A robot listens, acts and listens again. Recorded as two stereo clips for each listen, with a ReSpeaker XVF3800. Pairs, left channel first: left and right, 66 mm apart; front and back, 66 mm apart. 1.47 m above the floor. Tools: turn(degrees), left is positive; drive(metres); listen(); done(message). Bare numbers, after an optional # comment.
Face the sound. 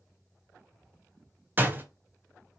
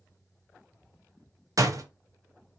# The door slam: 150° right.
turn(-150)
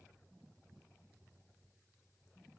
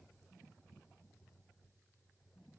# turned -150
done("Facing where the door slam came from. I can't hear it now.")